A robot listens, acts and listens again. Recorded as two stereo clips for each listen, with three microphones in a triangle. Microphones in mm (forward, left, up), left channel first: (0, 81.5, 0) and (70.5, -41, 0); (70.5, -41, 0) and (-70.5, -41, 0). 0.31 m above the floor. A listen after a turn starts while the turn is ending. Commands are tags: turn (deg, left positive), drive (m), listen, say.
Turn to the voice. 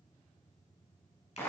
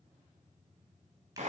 <listen/>
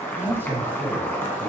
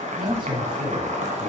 <turn deg="-135"/>
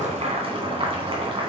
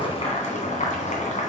<listen/>
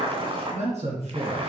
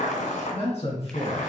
<turn deg="-35"/>
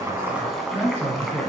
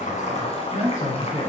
<turn deg="10"/>
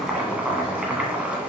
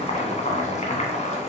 <listen/>
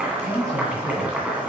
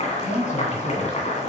<say>Found it: a man speaking, straight ahead, 2 to 4 m away.</say>